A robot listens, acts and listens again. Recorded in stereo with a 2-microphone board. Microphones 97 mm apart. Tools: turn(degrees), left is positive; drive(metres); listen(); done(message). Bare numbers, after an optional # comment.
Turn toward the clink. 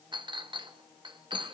# The clink: about 55° right or 125° right.
turn(-55)
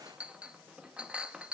# So it is at 15° right.
turn(-15)
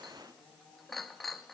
done("Facing the clink.")